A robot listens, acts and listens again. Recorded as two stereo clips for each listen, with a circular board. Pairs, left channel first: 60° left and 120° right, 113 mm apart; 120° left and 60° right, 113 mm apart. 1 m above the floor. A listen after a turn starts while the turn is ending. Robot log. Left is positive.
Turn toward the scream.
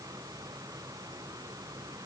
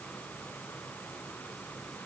cmd idle
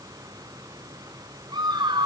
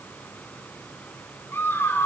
note: The scream: 170° right.
cmd yaw -170
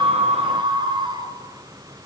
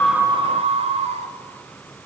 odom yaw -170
note: The scream is now 75° right.
cmd yaw -75
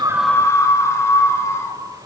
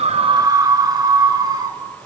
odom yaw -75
end: Found it: a scream, straight ahead, 2 to 4 m away.